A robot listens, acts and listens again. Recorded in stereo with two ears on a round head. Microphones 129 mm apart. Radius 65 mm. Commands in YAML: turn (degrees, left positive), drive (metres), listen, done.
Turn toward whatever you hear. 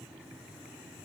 listen: true
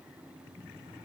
listen: true
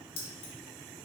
turn: 30
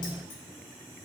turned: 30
listen: true
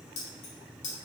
turn: 130
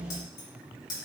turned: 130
turn: 30
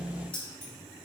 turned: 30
listen: true
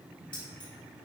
listen: true
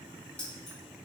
done: "I heard keys jangling from this way, but can't make it out now."